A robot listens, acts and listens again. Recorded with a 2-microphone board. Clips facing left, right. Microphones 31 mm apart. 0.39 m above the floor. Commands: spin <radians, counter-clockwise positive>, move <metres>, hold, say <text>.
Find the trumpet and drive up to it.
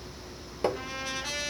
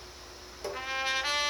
spin -0.61
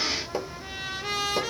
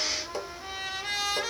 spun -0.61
move 1.0
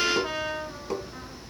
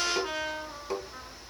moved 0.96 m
move 1.0
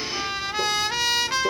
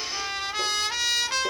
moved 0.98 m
move 1.0
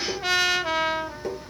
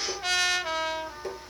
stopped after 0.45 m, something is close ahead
spin 0.17
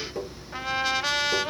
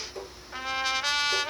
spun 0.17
say I am next to the trumpet.